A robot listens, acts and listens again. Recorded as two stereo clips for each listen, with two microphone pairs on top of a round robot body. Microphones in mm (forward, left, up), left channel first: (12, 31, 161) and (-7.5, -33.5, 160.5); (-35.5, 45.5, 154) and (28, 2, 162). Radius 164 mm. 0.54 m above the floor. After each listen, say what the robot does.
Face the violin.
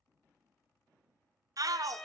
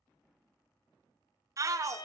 Turn 155° left.
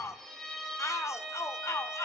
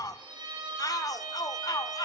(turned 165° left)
Turn 10° right.
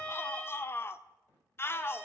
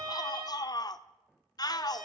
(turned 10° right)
Found it: a violin, straight ahead.